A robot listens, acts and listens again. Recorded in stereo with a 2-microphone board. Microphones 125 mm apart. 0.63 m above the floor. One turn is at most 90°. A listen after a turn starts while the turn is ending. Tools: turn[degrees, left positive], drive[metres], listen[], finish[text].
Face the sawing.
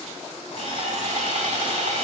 Thought: The sawing: about 65° right or 115° right.
Action: turn[-65]
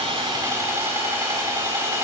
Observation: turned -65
Thought: So it is at 25° right.
Action: turn[-25]
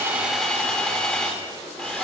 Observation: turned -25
Action: finish[Facing the sawing.]